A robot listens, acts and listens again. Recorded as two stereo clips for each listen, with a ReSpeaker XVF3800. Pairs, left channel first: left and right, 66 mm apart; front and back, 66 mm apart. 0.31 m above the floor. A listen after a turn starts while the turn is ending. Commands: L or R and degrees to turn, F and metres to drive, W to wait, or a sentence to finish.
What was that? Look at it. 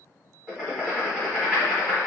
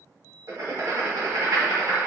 R160
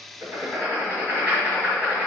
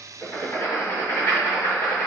R30
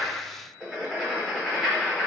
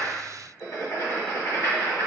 Facing the writing, 1 to 2 m away.